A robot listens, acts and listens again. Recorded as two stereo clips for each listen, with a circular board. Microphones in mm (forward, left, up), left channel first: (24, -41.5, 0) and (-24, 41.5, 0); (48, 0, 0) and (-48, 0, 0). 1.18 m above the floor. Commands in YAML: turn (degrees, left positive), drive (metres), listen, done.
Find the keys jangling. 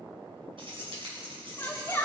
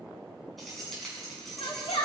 turn: 90
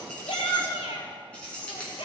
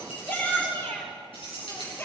turn: 15
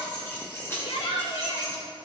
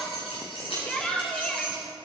done: "Facing the keys jangling."